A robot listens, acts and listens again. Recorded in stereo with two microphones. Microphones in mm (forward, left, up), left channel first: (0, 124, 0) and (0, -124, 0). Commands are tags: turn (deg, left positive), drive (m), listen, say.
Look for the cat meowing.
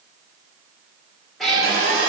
<turn deg="30"/>
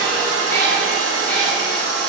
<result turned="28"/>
<turn deg="30"/>
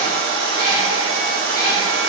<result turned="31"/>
<turn deg="165"/>
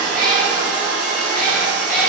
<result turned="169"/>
<say>Facing the cat meowing.</say>